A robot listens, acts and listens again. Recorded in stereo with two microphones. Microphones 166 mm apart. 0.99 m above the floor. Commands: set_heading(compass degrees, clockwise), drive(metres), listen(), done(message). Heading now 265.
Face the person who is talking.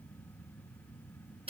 listen()
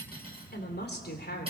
set_heading(175)
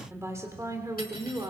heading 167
set_heading(192)
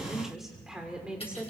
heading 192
set_heading(202)
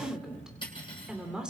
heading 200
done("Found it: a woman speaking, straight ahead, 2 to 4 m away.")